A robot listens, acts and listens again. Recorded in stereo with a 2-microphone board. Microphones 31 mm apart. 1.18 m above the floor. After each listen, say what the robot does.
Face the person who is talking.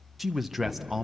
Turn 30° right.
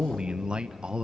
Turn 145° right.
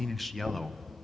Found it: a man speaking, straight ahead, under 1 m away.